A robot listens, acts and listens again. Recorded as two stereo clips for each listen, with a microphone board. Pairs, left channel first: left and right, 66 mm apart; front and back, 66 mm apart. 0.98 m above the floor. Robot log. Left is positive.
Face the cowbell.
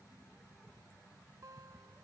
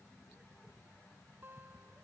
cmd idle
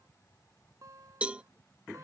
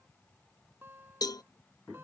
note: The cowbell: 20° right.
cmd yaw -20
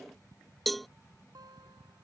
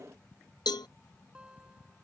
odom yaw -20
end: Found it: a cowbell, straight ahead.